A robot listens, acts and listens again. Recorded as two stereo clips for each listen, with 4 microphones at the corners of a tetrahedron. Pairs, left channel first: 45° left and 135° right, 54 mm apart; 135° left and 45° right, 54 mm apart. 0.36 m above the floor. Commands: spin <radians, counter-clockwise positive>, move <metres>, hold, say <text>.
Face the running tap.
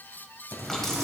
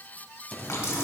spin 2.18
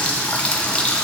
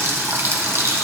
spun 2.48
spin -0.35
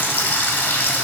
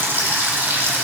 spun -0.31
say Facing the running tap, 1 to 2 m away.